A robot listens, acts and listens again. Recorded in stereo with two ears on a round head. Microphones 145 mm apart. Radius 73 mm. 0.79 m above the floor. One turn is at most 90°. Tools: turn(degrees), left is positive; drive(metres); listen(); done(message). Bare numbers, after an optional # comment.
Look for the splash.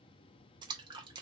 # The splash: about 25° right or 155° right.
turn(-25)
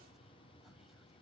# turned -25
listen()
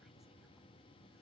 done("I heard a splash, but can't make it out now. It was about straight ahead or 130° right.")